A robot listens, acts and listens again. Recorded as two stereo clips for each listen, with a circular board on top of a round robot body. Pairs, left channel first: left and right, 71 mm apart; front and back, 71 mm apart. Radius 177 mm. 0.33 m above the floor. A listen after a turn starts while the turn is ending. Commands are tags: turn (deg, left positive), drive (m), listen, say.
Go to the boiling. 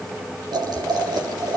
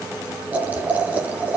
<turn deg="-110"/>
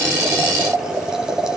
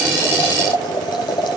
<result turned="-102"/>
<turn deg="-10"/>
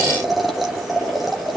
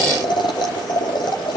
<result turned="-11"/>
<drive m="1.0"/>
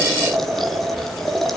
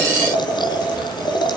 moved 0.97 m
<drive m="1.0"/>
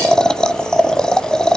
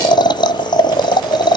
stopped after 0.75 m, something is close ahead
<turn deg="10"/>
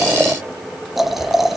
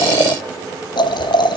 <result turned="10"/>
<say>I am next to the boiling.</say>